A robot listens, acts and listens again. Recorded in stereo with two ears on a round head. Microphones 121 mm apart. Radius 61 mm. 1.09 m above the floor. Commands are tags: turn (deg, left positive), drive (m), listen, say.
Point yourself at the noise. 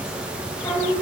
<turn deg="20"/>
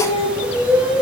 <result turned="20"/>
<turn deg="-25"/>
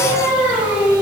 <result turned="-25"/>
<turn deg="-25"/>
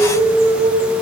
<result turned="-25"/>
<turn deg="-20"/>
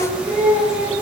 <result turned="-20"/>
<turn deg="-10"/>
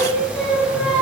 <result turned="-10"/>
<say>Found it: singing, straight ahead, 2 to 4 m away.</say>